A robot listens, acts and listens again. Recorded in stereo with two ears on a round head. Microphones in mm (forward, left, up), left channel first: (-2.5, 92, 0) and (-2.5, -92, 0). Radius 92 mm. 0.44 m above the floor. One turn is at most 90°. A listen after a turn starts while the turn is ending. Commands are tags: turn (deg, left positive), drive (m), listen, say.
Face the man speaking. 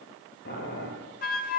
<listen/>
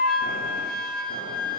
<listen/>
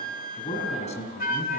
<turn deg="35"/>
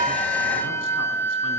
<listen/>
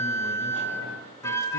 <listen/>
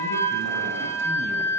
<say>I heard a man speaking, but can't make it out now. It was about straight ahead or 110° left.</say>